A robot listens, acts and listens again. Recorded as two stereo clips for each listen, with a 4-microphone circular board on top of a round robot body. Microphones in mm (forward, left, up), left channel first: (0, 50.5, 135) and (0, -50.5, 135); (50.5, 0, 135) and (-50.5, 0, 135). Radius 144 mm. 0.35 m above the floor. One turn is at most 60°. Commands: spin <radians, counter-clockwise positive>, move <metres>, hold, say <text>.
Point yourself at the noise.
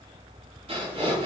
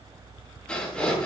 spin -1.05
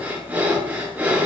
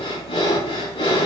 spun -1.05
spin -0.35
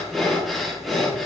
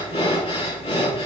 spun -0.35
say Facing the breathing.